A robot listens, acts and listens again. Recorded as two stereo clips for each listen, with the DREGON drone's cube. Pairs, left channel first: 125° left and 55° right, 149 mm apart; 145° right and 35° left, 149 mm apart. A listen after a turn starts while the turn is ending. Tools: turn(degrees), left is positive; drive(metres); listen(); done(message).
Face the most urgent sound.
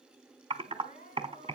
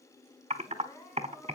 turn(degrees=145)
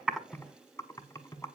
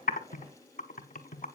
listen()
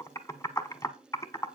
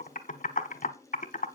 listen()
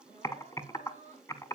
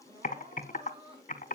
turn(degrees=-15)
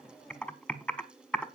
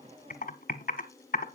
listen()
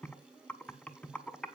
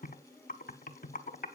listen()
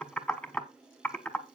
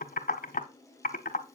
done("I heard crying from this way, but can't make it out now.")